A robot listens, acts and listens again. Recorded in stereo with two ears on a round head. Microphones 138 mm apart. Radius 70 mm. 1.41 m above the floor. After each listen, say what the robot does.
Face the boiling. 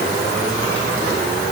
Keep listening.
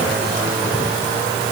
Keep listening.
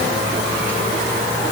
I can't make out boiling.